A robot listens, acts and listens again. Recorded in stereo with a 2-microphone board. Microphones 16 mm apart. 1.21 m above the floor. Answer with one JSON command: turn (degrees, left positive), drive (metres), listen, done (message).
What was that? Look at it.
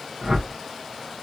{"turn": -55}
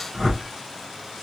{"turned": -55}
{"turn": -70}
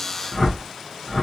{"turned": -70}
{"turn": 15}
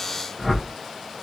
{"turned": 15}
{"done": "Facing the whoosh, 1 to 2 m away."}